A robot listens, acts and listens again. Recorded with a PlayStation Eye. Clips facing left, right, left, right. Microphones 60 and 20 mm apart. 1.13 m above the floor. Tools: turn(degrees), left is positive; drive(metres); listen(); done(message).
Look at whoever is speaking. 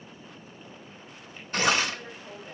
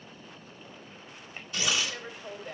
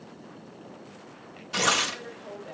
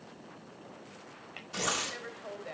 turn(degrees=-55)
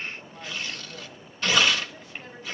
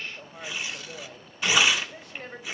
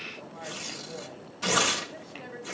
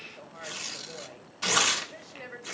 turn(degrees=-65)
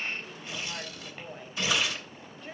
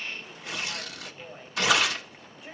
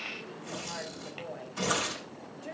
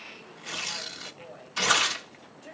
turn(degrees=-10)
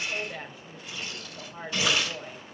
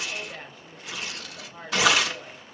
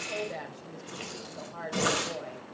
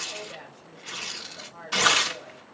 done("Found it: a woman speaking, straight ahead.")